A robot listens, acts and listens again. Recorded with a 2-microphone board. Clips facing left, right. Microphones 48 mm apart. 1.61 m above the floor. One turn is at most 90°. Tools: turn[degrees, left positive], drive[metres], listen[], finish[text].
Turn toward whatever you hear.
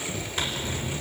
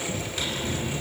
Thought: The zipper: about 30° left or 150° left.
Action: turn[30]
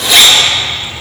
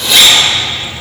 Action: finish[Facing the zipper, over 4 m away.]